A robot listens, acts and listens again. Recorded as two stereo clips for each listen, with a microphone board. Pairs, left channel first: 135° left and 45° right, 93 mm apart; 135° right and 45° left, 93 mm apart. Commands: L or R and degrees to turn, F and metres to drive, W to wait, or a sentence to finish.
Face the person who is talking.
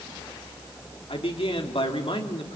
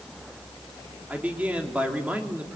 L120
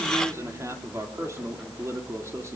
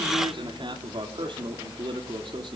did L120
L15
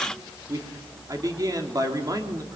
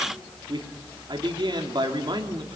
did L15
Facing the man speaking, 2 to 4 m away.